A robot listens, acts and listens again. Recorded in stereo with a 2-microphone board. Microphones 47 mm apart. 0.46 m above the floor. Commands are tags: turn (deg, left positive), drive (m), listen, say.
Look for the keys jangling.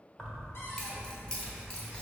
<turn deg="30"/>
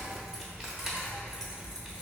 <turn deg="-15"/>
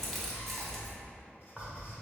<say>Facing the keys jangling, under 1 m away.</say>